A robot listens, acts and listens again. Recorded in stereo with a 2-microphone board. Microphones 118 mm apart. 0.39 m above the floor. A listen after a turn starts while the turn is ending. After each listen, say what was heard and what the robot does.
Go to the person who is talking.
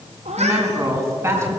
The woman speaking: about 20° right or 160° right. Turn 20° right.
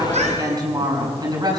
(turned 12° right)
So it is at 145° right. Turn 145° right.
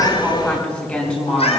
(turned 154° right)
The woman speaking is now 10° left. Turn 10° left.
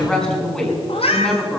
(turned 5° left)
Drive 1.0 m forward.
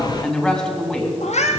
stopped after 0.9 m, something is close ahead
Something is in my way. I am facing the woman speaking but have not reached it.